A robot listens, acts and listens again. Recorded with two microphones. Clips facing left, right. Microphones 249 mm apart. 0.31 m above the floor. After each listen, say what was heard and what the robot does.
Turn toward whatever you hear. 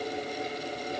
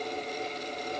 Keep listening.
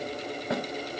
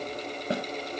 The snare drum: about 35° right or 145° right. Turn 35° right.
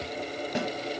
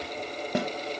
So it is at 110° right. Turn 110° right.
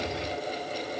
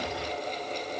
Keep listening.
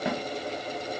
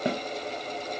The snare drum is now 40° right. Turn 40° right.
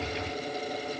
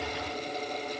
Keep listening.
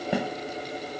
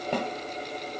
The snare drum is now 10° left. Turn 10° left.
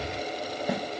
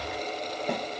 Facing the snare drum, under 1 m away.